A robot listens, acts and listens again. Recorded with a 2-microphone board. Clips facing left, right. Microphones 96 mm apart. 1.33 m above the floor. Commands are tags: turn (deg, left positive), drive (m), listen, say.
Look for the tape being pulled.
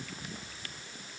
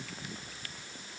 <listen/>
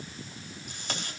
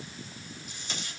<turn deg="60"/>
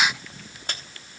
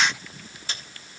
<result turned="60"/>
<turn deg="55"/>
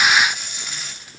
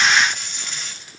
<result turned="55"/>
<say>Found it: tape being pulled, straight ahead.</say>